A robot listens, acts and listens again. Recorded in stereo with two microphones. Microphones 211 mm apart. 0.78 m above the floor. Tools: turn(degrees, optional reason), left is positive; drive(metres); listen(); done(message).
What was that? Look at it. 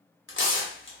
turn(degrees=65, reason="The tearing paper: about 65° left or 115° left.")
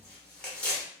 done("Found it: tearing paper, straight ahead, under 1 m away.")